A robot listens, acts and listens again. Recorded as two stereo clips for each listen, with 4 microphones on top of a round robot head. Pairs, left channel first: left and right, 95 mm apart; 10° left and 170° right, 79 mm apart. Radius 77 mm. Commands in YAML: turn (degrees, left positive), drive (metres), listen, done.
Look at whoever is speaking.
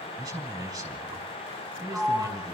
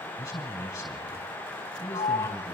turn: -45
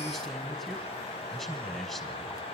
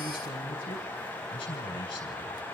done: "Facing the man speaking."